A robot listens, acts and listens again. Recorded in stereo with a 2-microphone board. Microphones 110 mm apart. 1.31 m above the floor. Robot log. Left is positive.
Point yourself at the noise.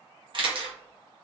note: The camera shutter: about 50° right or 130° right.
cmd yaw -50
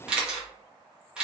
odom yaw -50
note: So it is at 10° right.
cmd yaw -10
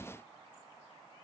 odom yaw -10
cmd idle
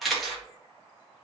end: Facing the camera shutter.